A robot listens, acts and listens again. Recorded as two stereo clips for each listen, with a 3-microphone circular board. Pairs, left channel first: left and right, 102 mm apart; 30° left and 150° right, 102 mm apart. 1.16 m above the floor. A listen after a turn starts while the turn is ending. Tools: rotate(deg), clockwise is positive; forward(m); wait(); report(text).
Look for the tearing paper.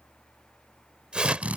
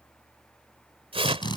rotate(170)
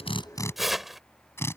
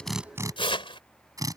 report("Facing the tearing paper.")